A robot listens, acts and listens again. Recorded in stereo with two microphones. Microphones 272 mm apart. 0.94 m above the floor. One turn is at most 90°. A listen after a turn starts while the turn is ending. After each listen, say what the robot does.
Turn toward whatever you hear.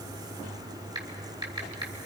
Turn 15° right.
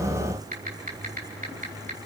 Turn 90° right.
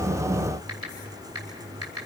Turn 65° right.
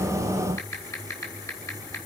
Turn 10° left.
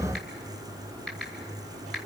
Facing the typing on a keyboard.